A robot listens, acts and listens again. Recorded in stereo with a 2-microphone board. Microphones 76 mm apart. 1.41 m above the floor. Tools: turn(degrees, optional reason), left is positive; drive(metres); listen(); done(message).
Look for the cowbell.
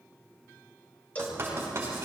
turn(degrees=20, reason="The cowbell: about 20° left or 160° left.")
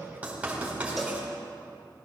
listen()
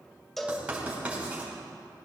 done("Found it: a cowbell, straight ahead.")